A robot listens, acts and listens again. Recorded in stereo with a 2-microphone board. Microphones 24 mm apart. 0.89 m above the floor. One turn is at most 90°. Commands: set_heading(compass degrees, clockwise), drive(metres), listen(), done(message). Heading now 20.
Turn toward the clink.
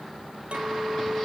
set_heading(85)
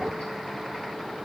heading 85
listen()
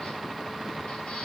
listen()
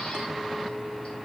done("I heard a clink, but can't make it out now. It was about straight ahead or 50° right.")